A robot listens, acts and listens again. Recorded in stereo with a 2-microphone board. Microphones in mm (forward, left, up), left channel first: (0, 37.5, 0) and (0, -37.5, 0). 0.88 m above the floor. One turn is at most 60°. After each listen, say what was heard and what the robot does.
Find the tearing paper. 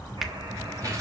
The tearing paper: about 50° right or 130° right. Turn 50° right.
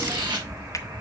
So it is at 80° right. Turn 60° right.
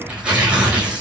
The tearing paper is now 15° right. Turn 15° right.
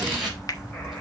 Found it: tearing paper, straight ahead.